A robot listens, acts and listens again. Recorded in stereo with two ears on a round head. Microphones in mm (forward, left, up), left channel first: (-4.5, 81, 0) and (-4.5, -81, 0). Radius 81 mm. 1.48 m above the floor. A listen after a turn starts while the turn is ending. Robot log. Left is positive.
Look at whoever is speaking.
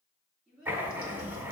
cmd yaw -30
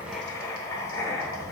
cmd idle
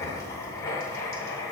cmd idle
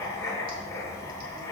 end: I heard a child speaking, but can't make it out now. It was about 25° left or 145° right.